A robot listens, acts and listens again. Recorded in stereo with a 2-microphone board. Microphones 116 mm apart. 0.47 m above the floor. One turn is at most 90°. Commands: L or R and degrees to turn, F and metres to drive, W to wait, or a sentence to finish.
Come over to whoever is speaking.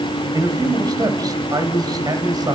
R35
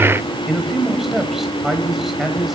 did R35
F1.0
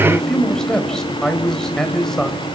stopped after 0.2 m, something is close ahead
Blocked. The man speaking is further on, straight ahead.